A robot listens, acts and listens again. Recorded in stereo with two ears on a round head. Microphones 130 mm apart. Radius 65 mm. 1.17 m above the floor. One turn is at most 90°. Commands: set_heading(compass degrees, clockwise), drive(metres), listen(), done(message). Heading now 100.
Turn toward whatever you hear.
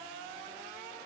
listen()
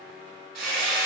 set_heading(165)
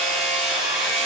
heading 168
done("Found it: hammering, straight ahead, 2 to 4 m away.")